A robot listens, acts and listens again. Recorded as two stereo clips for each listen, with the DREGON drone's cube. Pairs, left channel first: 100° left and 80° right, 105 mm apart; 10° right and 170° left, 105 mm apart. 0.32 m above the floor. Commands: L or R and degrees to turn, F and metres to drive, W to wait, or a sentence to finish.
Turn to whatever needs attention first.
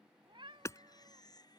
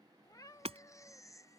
L50
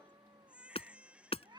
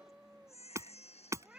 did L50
Found it: a baby crying, straight ahead.